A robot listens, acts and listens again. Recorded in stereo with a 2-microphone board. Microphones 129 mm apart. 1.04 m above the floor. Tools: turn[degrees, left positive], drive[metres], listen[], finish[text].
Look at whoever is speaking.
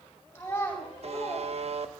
Thought: The child speaking: about 15° left or 165° left.
Action: turn[15]
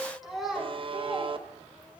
Action: turn[-30]
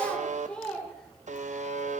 Action: finish[Facing the child speaking, 2 to 4 m away.]